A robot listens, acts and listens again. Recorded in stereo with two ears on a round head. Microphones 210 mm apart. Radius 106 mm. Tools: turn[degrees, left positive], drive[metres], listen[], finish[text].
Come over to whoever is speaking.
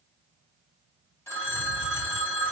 Action: listen[]
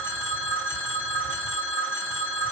Action: listen[]
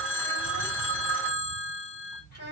Thought: The child speaking: about 65° left or 115° left.
Action: turn[65]
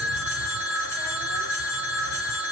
Action: listen[]
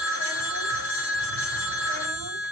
Action: listen[]
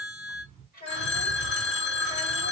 Thought: So it is at 40° left.
Action: turn[40]
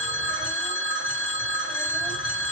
Action: listen[]
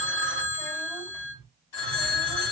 Action: listen[]
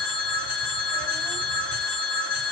Action: finish[I heard a child speaking from this way, but can't make it out now. I did not reach it.]